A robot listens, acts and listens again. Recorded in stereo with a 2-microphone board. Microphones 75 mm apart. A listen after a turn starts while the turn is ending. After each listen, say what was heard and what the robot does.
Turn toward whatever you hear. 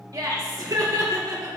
The laughter: about 55° right or 125° right. Turn 55° right.
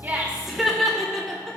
Facing the laughter.